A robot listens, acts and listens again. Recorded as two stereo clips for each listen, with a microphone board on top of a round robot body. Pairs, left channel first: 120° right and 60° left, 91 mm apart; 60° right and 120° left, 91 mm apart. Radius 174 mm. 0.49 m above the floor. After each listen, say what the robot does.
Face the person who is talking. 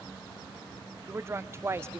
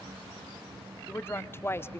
Found it: a woman speaking, straight ahead, 1 to 2 m away.